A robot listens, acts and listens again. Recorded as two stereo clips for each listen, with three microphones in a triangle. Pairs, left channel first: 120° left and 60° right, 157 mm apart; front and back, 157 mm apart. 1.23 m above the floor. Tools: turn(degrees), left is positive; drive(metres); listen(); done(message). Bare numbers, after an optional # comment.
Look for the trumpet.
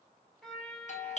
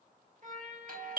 # The trumpet: 150° right.
turn(-150)
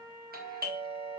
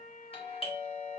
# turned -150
done("Facing the trumpet.")